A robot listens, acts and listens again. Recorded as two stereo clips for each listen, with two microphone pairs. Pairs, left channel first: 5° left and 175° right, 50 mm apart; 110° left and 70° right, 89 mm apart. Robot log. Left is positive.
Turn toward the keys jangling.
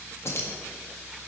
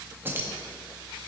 end: Facing the keys jangling.